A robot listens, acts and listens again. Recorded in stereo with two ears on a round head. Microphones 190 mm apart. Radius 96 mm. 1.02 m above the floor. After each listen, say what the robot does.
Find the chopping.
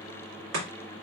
Turn 90° right.
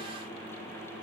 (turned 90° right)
Keep listening.
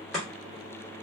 Facing the chopping, 1 to 2 m away.